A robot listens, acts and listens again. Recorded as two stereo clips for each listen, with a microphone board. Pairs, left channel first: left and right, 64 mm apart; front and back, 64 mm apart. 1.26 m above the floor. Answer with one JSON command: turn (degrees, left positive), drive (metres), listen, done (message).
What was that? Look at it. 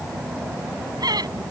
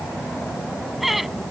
{"turn": -95}
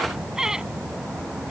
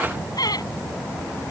{"turn": -10}
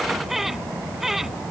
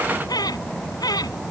{"done": "Facing the laughter."}